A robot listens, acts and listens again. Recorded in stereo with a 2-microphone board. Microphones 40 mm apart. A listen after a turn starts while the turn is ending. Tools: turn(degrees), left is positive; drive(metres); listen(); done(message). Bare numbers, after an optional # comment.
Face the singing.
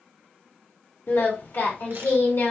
turn(90)
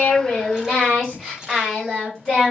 done("Facing the singing.")